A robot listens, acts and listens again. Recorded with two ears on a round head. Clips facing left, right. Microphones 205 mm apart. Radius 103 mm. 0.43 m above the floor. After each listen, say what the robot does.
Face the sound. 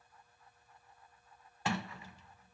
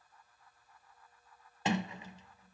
Turn 20° right.
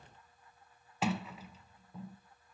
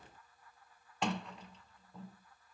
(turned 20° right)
Found it: a sliding door, straight ahead.